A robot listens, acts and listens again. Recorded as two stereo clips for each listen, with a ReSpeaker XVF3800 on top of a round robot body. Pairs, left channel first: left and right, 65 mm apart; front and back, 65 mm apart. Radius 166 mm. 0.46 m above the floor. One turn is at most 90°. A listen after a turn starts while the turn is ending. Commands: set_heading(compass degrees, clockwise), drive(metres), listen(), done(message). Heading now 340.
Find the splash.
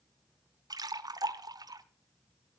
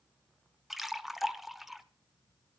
set_heading(70)
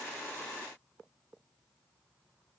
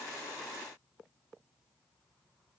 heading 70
done("I heard a splash from this way, but can't make it out now.")